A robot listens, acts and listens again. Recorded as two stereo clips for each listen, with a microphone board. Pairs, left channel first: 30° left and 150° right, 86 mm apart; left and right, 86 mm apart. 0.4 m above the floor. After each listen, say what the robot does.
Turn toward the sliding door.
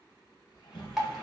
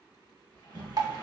Turn 50° left.
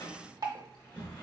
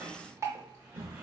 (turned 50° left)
Turn 25° right.
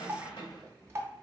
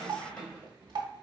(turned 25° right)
Turn 15° left.
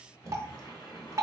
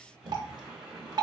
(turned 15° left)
Found it: a sliding door, straight ahead, 1 to 2 m away.